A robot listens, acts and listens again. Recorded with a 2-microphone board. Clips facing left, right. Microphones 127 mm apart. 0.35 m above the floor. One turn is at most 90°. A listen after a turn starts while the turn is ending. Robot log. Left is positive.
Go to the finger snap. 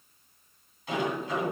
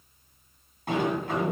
cmd idle
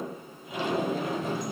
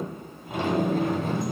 cmd idle
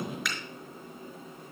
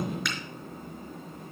cmd yaw +30
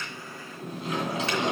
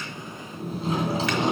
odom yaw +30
cmd idle
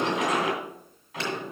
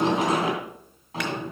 cmd idle
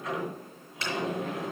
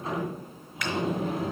note: So it is at 150° left.
cmd yaw +90
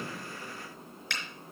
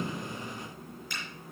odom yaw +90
note: The finger snap is now 85° left.
cmd yaw +85
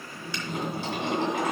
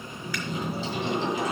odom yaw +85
cmd idle
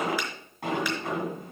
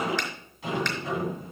cmd idle
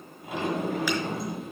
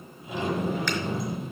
end: I heard a finger snap from this way, but can't make it out now. I did not reach it.